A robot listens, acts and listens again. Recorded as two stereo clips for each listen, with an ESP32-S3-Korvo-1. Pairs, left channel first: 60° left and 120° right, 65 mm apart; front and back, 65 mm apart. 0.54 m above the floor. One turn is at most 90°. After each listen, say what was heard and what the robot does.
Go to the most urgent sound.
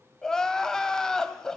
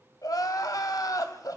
The crying: 25° right. Turn 25° right.
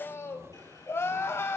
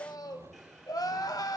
The crying is now 10° left. Turn 10° left.
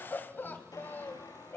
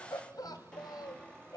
Drive 1.0 m forward.
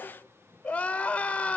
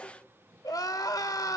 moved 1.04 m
The crying is now 10° right. Turn 10° right.
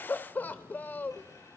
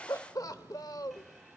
Drive 1.0 m forward.
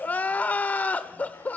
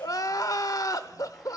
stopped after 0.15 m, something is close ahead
Arrived at the crying, straight ahead.